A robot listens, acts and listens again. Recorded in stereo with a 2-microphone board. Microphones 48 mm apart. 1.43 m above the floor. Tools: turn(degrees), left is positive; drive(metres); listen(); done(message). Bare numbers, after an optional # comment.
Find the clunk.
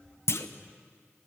# The clunk: about 65° left or 115° left.
turn(65)
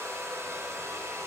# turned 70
listen()
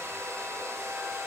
done("I heard a clunk, but can't make it out now. It was about 5° right or 45° left.")